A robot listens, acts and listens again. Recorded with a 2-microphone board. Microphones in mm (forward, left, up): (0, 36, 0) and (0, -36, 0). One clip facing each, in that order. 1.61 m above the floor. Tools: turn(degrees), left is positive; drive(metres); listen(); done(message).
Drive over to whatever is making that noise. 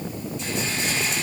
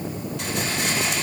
turn(degrees=-90)
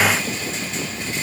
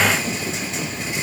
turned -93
listen()
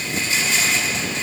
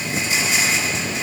drive(metres=1.0)
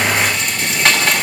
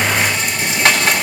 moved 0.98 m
drive(metres=1.0)
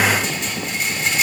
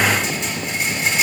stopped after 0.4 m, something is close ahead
done("Something is in my way. I am facing the rattle but have not reached it.")